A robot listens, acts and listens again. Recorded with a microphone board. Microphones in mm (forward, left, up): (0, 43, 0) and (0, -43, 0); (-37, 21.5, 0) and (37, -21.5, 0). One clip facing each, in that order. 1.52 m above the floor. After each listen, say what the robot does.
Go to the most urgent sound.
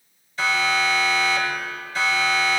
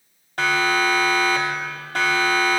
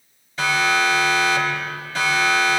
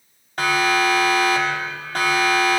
Turn 65° right.
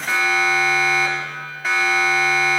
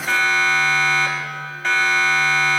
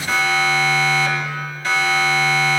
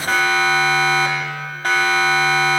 Drive 1.0 m forward.
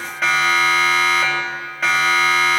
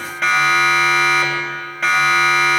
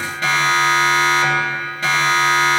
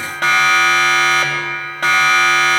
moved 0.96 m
Drive 1.0 m forward.
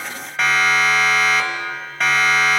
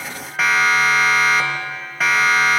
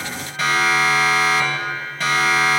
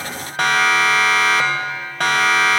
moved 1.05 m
Drive 1.0 m forward.
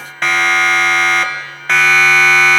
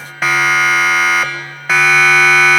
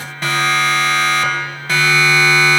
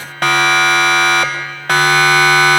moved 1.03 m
Drive 1.0 m forward.
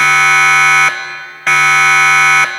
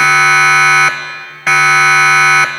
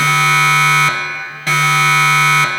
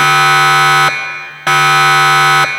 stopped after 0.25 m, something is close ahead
I am next to the siren.